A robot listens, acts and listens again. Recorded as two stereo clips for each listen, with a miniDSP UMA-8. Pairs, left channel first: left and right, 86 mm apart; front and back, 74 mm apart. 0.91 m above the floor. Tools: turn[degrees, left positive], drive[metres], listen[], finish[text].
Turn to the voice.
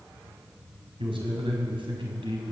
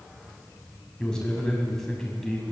Thought: The man speaking: 90° right.
Action: turn[-90]
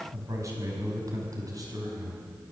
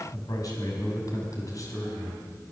Thought: The man speaking is now 45° right.
Action: turn[-45]
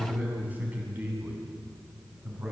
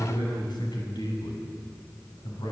Thought: The man speaking is now 20° right.
Action: turn[-20]
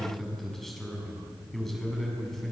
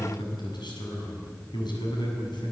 Action: finish[Found it: a man speaking, straight ahead.]